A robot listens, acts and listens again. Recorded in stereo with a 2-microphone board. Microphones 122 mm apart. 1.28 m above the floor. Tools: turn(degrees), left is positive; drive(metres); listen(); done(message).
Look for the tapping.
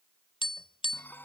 turn(degrees=45)
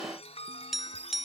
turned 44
done("Found it: tapping, straight ahead.")